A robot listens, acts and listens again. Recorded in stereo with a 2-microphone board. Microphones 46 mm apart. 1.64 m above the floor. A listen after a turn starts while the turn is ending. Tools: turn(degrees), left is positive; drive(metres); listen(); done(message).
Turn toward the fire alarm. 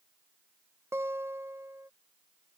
listen()
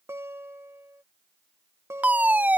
turn(degrees=-35)
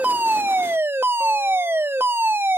turn(degrees=-100)
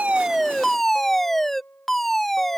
done("Facing the fire alarm.")